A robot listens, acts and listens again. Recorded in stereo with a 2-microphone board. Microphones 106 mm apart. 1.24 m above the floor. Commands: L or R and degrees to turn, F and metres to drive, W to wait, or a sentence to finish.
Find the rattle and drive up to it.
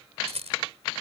R90
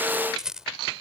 F1.0
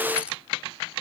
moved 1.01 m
W
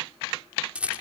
R10
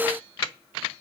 W
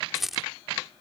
F1.0
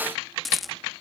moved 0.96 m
F1.0
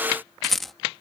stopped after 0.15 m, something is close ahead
Arrived at the rattle, straight ahead.